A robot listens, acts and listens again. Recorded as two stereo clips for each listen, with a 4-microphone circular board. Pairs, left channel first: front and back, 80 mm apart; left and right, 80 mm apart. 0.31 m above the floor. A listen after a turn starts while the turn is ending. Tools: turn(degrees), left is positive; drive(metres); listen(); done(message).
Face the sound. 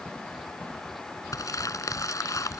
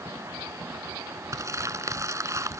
turn(degrees=-45)
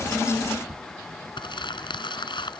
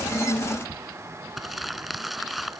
done("Facing the crumpling.")